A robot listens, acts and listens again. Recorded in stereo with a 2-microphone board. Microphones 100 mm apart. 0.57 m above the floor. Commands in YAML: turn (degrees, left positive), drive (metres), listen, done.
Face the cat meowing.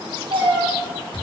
turn: -75
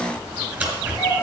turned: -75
turn: -40
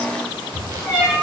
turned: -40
turn: -20
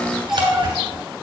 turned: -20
done: "Found it: a cat meowing, straight ahead, over 4 m away."